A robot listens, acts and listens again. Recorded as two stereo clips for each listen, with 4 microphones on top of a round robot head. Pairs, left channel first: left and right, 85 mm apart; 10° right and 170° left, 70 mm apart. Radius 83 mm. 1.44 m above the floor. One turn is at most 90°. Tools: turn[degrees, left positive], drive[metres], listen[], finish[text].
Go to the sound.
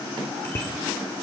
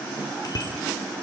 Thought: The bicycle bell: 20° left.
Action: turn[20]
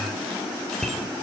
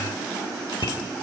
Action: drive[1.0]
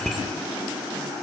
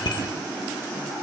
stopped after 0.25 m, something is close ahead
Action: finish[Blocked. The bicycle bell is further on, straight ahead.]